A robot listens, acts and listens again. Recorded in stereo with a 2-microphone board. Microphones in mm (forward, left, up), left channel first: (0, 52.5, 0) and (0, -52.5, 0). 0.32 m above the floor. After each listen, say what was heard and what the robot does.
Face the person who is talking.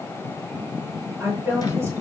The woman speaking: about 20° right or 160° right. Turn 20° right.
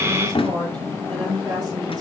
So it is at 140° right. Turn 140° right.
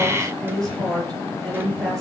Found it: a woman speaking, straight ahead, over 4 m away.